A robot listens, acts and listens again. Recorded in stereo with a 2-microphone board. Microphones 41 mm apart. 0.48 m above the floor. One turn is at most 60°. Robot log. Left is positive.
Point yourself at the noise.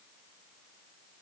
cmd idle
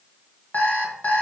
note: The alarm clock: about 50° left or 130° left.
cmd yaw +50
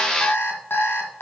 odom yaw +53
note: So it is at 75° left.
cmd yaw +60
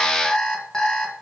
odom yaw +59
note: The alarm clock is now 15° left.
cmd yaw +15
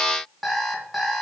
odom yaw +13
end: Found it: an alarm clock, straight ahead, 1 to 2 m away.